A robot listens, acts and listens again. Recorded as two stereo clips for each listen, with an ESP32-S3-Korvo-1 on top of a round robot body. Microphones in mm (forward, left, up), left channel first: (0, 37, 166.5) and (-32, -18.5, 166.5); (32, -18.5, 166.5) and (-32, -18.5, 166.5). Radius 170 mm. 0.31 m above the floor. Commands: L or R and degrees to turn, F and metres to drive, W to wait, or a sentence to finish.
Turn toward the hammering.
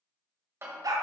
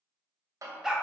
R165
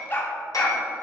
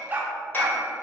W
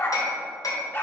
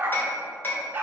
L55
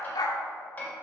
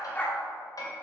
Found it: hammering, straight ahead, 1 to 2 m away.